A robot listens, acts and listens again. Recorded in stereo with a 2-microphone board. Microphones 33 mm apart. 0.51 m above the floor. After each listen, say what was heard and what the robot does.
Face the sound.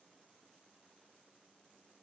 Keep listening.
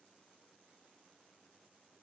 Keep listening.
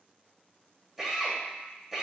Turn 30° right.
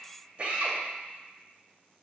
So it is at 145° right. Turn 145° right.
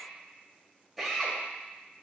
Facing the drill, 2 to 4 m away.